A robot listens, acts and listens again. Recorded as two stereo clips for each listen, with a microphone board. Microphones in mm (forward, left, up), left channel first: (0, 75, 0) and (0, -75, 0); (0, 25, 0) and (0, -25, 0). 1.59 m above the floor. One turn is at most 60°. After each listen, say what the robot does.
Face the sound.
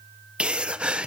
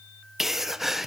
Turn 30° right.
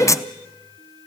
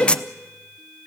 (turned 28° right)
Turn 25° left.
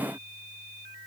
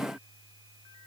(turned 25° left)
I heard a sneeze from this way, but can't make it out now.